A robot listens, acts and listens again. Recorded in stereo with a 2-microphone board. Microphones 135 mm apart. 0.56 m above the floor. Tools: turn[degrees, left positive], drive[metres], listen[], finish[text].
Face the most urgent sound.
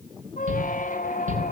Thought: The shout: about 70° right or 110° right.
Action: turn[-70]
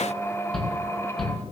Action: finish[Found it: a shout, straight ahead, over 4 m away.]